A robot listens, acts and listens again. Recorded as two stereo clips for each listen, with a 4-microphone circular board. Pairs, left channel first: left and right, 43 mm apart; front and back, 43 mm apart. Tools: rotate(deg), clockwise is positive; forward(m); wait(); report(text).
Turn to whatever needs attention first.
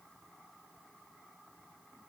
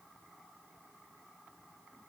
wait()
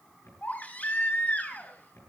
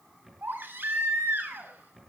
rotate(-140)
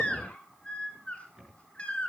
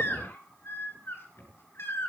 rotate(-25)
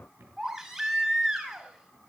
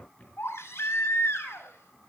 rotate(15)
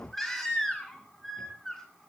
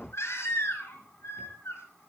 report("Found it: a baby crying, straight ahead, over 4 m away.")